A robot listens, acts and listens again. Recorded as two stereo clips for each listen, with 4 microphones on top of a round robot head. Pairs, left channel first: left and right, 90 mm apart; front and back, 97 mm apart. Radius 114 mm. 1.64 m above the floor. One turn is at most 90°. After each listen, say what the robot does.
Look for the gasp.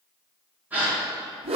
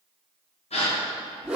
Turn 15° right.
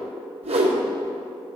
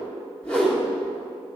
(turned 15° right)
Facing where the gasp came from. I can't hear it now.